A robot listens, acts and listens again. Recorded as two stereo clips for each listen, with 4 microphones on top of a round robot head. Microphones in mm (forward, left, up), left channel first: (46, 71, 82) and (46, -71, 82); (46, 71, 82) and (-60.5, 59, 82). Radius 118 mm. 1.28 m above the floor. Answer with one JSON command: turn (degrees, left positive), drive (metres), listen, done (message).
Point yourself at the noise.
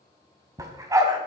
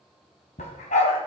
{"turn": -25}
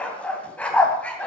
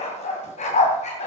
{"turn": 10}
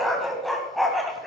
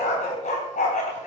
{"done": "Found it: a dog barking, straight ahead, 2 to 4 m away."}